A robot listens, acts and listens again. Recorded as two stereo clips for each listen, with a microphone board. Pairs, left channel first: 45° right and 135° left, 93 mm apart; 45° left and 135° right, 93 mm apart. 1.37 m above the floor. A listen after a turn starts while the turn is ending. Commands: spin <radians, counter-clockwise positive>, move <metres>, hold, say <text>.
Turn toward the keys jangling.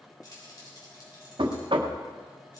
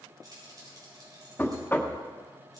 spin -1.57
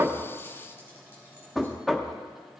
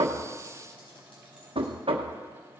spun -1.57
hold
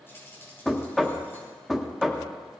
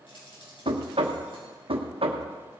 spin 0.35
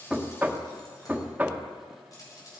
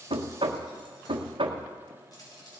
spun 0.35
say Found it: keys jangling, straight ahead, over 4 m away.